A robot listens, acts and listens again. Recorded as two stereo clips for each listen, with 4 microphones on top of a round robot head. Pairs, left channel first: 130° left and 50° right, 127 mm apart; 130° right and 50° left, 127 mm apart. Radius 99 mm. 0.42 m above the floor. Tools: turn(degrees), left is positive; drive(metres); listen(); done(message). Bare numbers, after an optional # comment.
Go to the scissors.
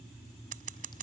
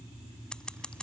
# The scissors: 45° right.
turn(-45)
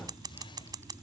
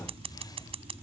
# The scissors is now 10° left.
turn(10)
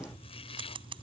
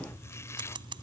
drive(1.0)
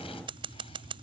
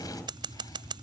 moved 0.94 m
drive(1.0)
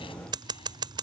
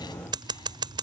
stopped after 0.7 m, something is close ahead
done("I am next to the scissors.")